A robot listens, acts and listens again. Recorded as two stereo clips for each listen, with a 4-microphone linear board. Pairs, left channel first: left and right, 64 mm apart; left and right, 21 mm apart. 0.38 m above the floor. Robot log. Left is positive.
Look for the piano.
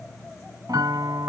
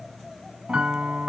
cmd yaw -90
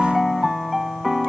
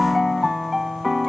end: Facing the piano.